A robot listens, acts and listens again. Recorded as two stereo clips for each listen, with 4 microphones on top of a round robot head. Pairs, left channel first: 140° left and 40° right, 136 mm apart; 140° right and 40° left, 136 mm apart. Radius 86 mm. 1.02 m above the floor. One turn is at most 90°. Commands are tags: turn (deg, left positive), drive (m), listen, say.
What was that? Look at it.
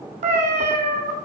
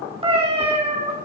<say>Facing the cat meowing, 2 to 4 m away.</say>